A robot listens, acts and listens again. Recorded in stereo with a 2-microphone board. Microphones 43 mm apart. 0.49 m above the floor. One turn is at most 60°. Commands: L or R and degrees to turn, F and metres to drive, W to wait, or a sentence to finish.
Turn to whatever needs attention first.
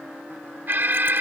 R50
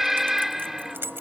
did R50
Facing the alarm.